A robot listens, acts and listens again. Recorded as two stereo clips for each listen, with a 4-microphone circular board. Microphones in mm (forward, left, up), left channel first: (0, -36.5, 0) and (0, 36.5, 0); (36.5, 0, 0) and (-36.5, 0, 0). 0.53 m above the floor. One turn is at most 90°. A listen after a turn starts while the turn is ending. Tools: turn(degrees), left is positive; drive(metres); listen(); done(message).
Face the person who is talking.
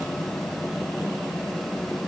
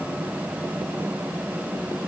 listen()
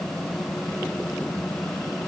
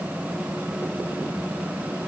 listen()
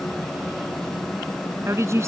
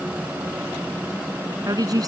turn(degrees=90)
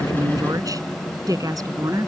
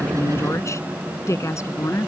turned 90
turn(degrees=50)
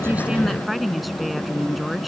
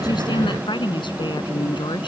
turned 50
done("Found it: a woman speaking, straight ahead.")